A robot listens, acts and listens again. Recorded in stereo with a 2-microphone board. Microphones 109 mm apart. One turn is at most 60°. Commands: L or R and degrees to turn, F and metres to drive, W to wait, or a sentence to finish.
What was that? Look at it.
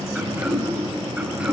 R30
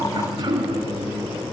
R60
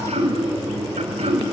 R60
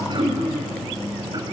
R45
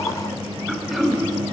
Found it: throat clearing, straight ahead.